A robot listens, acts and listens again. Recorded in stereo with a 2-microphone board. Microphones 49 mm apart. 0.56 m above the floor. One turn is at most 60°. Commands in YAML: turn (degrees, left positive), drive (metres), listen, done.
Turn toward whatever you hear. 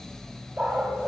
turn: -45
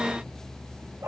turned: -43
turn: -60
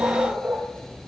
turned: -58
turn: -20
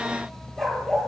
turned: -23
turn: 10
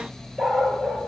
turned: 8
done: "Found it: a dog barking, straight ahead."